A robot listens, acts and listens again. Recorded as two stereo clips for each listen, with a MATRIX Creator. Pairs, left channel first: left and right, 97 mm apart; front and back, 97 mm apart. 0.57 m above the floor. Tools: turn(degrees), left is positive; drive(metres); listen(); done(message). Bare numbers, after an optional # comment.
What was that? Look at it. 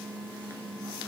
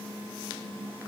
listen()
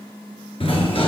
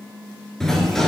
# The sliding door: 85° left.
turn(85)
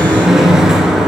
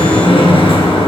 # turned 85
done("Facing the sliding door, 1 to 2 m away.")